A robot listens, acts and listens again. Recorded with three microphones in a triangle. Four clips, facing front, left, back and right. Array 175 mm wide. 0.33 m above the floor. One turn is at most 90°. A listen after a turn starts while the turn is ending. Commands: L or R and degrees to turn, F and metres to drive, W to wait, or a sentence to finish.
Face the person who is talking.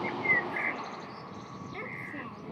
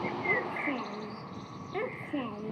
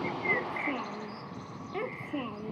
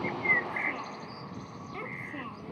L90
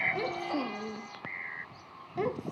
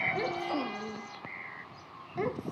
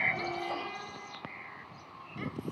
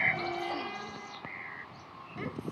L35
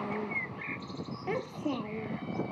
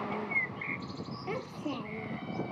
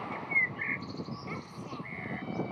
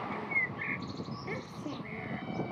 L15
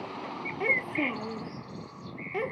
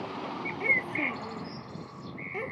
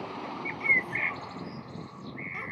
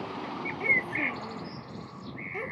Found it: a child speaking, straight ahead.